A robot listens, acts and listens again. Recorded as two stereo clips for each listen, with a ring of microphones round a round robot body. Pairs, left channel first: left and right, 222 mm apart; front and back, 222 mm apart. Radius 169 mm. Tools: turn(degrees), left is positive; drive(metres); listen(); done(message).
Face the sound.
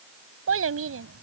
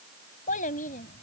turn(degrees=-65)
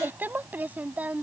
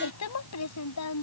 done("Facing the child speaking.")